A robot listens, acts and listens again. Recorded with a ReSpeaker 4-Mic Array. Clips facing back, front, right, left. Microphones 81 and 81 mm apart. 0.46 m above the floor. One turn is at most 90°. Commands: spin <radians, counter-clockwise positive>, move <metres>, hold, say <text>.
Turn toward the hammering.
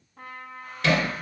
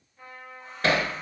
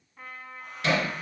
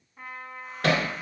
spin 0.87
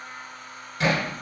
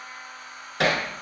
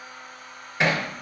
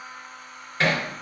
spin -0.26
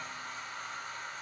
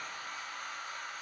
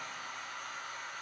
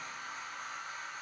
hold
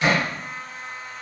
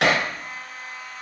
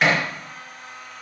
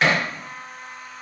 say Found it: hammering, straight ahead, 1 to 2 m away.